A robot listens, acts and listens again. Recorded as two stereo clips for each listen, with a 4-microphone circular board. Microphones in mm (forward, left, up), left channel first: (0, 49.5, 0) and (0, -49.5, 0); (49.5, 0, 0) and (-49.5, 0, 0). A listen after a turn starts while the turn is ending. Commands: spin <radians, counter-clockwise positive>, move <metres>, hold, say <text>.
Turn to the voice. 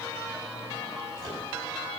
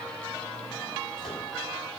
hold
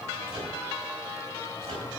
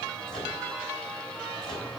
hold
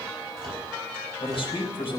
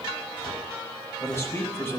spin 1.13
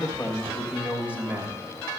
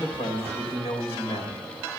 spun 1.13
spin -0.26
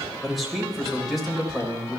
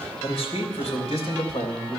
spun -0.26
say Found it: a man speaking, straight ahead.